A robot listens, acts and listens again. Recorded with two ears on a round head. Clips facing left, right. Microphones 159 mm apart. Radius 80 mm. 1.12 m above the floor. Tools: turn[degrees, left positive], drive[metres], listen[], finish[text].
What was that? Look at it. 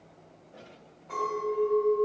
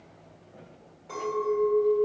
Thought: The clink: about 50° right or 130° right.
Action: turn[-50]
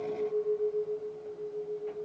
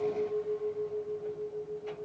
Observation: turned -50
Action: finish[Found it: a clink, straight ahead, 2 to 4 m away.]